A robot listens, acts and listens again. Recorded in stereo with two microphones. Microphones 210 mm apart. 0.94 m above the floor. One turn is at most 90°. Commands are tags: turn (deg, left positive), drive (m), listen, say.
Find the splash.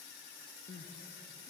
<listen/>
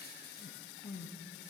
<listen/>
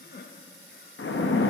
<turn deg="70"/>
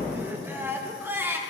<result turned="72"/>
<listen/>
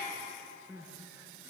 <say>I heard a splash, but can't make it out now. It was about 5° right or 40° left.</say>